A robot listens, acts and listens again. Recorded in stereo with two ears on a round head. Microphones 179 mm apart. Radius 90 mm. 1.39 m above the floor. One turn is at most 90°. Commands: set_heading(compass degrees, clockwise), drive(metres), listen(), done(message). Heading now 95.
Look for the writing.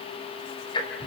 listen()
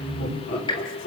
listen()
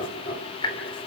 done("I can't make out writing, only laughter and ticking.")